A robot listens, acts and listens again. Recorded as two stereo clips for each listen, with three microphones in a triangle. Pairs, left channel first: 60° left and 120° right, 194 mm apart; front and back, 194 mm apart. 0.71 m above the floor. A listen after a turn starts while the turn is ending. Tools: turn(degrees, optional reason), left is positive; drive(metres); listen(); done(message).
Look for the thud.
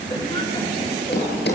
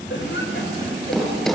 turn(degrees=85, reason="The thud: 85° left.")
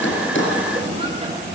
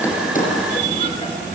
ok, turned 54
turn(degrees=35, reason="Nothing new. It was at 35° left.")
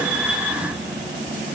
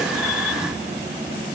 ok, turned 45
turn(degrees=-10, reason="Nothing new. It was at 10° right.")
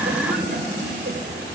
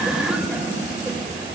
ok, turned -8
done("I heard a thud from this way, but can't make it out now.")